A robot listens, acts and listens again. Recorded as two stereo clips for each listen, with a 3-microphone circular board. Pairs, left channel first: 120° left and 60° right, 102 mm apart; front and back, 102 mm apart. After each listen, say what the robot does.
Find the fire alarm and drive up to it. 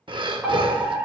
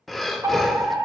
Turn 135° right.
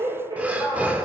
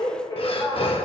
Turn 35° right.
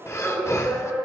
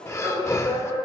Turn 10° left.
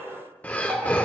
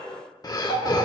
Drive 1.0 m forward.
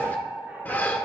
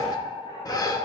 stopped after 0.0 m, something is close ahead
Blocked. The fire alarm is further on, straight ahead.